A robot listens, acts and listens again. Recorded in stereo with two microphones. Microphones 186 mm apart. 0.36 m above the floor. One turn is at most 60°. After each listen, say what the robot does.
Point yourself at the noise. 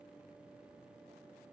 Keep listening.
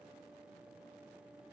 Keep listening.
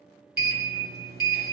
Turn 60° right.
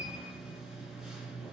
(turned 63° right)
Found it: a sliding door, straight ahead.